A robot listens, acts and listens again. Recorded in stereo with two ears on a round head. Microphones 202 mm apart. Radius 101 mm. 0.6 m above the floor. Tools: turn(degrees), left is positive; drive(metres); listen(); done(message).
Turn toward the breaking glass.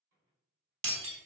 turn(degrees=-60)
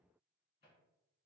listen()
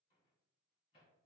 done("I heard breaking glass, but can't make it out now. It was about straight ahead or 60° right.")